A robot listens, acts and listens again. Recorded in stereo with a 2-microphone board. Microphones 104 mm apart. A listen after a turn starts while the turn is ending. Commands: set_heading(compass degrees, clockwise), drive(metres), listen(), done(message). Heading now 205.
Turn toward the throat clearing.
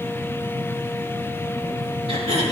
set_heading(275)
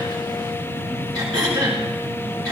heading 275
set_heading(315)
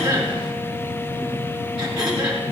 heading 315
set_heading(325)
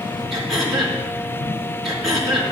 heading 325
done("Facing the throat clearing, over 4 m away.")